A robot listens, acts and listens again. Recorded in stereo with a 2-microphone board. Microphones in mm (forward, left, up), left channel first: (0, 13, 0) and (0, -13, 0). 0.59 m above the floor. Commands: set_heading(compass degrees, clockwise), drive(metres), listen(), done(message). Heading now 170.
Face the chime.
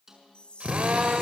set_heading(130)
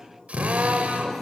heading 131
listen()
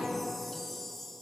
done("Facing the chime.")